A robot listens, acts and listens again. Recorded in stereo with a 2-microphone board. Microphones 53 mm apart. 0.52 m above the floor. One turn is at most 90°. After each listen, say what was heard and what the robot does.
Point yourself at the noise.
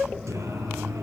The singing: about 70° right or 110° right. Turn 70° right.
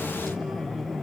Keep listening.
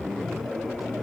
Keep listening.
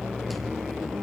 I heard singing, but can't make it out now. It was about straight ahead or 40° right.